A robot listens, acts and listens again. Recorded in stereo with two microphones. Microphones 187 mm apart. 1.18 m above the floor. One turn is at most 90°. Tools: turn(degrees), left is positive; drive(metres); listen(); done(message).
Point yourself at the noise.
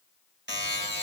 turn(degrees=-75)
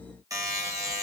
turn(degrees=-20)
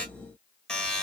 done("Facing the buzzer, 1 to 2 m away.")